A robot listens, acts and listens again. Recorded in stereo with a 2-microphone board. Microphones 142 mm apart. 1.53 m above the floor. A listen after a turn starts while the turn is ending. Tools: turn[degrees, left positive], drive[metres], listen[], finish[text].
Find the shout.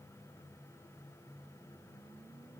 Action: listen[]
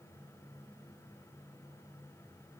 Action: listen[]
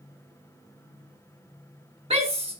Thought: The shout: about 45° right or 135° right.
Action: turn[-45]
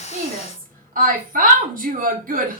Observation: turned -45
Thought: So it is at 90° right.
Action: turn[-90]
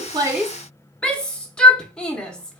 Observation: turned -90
Action: finish[Found it: a shout, straight ahead, 1 to 2 m away.]